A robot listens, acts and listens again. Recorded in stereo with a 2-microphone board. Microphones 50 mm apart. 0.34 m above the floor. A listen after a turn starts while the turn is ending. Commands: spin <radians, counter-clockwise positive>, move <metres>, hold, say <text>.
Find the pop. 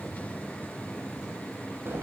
hold
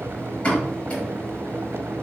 spin 0.44
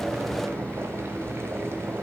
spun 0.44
hold
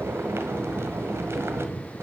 say I heard a pop, but can't make it out now. It was about straight ahead or 130° left.